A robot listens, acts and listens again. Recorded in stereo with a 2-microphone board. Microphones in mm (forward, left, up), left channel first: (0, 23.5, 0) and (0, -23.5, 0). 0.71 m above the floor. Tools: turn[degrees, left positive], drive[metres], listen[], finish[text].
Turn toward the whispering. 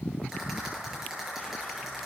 Action: listen[]
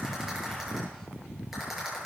Action: listen[]
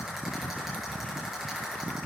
Action: finish[I can't make out whispering to turn to.]